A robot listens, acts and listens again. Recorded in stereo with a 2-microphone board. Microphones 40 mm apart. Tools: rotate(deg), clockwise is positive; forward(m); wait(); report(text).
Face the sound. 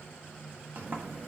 rotate(50)
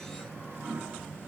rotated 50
rotate(80)
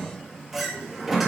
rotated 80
report("Facing the sliding door, 1 to 2 m away.")